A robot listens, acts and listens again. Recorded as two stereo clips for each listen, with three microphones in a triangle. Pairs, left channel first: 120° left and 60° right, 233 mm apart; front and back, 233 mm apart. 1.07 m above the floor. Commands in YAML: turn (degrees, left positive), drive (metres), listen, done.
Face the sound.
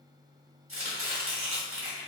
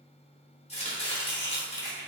turn: -60
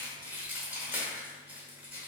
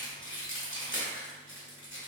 turn: 20
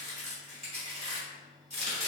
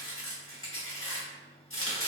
done: "Found it: chopping, straight ahead, 1 to 2 m away."